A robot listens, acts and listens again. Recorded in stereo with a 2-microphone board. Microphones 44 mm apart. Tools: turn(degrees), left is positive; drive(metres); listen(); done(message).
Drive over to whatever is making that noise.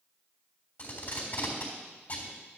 turn(degrees=35)
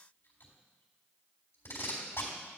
turn(degrees=105)
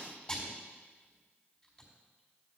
turn(degrees=25)
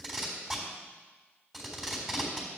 drive(metres=1.0)
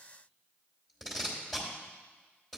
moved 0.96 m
drive(metres=1.0)
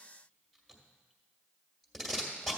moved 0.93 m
drive(metres=1.0)
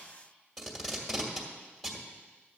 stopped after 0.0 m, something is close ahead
done("I am next to the tape being pulled.")